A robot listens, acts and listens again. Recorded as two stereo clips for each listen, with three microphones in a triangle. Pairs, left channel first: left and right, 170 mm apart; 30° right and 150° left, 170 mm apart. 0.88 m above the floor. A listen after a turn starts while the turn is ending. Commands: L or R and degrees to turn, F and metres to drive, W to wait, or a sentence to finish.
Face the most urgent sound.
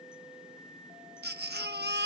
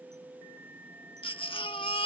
R90
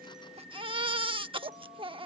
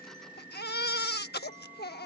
R30
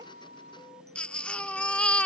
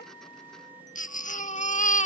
Facing the baby crying.